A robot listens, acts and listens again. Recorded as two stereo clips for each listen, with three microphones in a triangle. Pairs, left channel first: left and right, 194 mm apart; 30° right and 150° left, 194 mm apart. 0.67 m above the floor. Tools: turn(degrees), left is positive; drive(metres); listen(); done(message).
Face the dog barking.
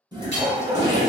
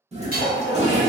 turn(degrees=-30)
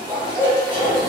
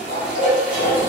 turn(degrees=-20)
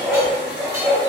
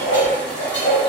turn(degrees=-15)
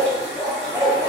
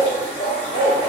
turn(degrees=-25)
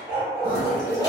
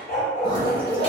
turn(degrees=-10)
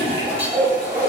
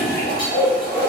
turn(degrees=-10)
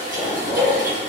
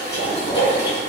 done("Facing the dog barking, 1 to 2 m away.")